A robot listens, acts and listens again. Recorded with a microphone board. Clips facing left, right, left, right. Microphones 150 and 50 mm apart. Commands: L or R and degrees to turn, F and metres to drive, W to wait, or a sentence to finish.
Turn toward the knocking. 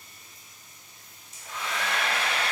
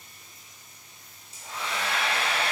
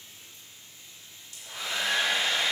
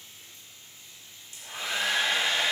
W
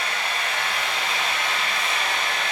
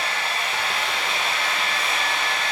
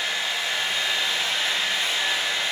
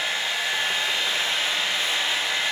W
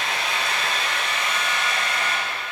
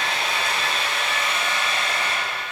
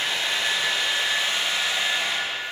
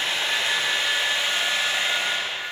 I can't make out knocking to turn to.